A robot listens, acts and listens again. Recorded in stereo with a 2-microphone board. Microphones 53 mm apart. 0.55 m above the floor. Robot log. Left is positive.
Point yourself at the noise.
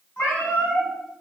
note: The cat meowing: about 45° left or 135° left.
cmd yaw +45
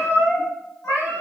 note: So it is at 100° left.
cmd yaw +100
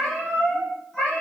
note: The cat meowing is now 10° left.
cmd yaw +10
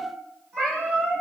end: Found it: a cat meowing, straight ahead, 2 to 4 m away.